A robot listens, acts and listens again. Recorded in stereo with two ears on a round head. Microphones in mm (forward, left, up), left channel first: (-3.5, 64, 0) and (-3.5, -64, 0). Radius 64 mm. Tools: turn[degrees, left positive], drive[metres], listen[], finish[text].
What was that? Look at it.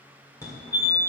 Thought: The fire alarm: about 20° left or 160° left.
Action: turn[20]
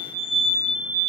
Action: finish[Found it: a fire alarm, straight ahead, 1 to 2 m away.]